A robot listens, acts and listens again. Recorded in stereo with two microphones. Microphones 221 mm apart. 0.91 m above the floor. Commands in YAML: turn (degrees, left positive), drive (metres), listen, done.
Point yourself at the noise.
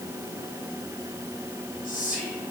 turn: 40
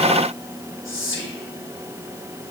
turn: 100
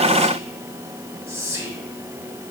turn: -15
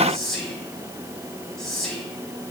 done: "Found it: whispering, straight ahead."